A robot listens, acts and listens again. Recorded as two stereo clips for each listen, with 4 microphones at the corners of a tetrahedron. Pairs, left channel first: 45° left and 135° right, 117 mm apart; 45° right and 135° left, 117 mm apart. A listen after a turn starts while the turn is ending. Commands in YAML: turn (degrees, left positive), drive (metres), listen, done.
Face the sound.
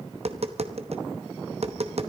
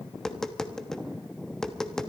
turn: -130
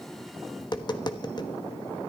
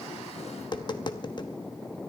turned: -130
done: "Found it: tapping, straight ahead."